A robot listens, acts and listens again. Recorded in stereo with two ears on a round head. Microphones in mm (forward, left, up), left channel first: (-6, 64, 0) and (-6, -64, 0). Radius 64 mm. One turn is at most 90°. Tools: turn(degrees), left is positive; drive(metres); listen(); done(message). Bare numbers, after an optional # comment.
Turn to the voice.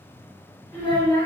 turn(30)
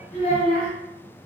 # So it is at 135° left.
turn(90)
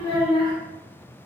# The child speaking is now 40° left.
turn(40)
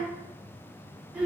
done("Facing the child speaking, 1 to 2 m away.")